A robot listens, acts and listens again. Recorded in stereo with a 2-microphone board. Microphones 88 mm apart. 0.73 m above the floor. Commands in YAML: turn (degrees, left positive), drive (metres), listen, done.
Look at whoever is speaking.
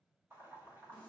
listen: true
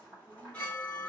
listen: true
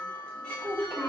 turn: -30
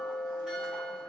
listen: true
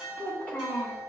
turn: 20
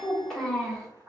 done: "Found it: a child speaking, straight ahead, 1 to 2 m away."